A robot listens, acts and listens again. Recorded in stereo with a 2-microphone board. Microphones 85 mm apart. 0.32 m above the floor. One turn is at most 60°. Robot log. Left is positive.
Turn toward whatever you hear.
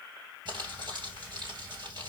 note: The crumpling: about 65° right or 115° right.
cmd yaw -60
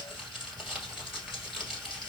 end: Found it: crumpling, straight ahead.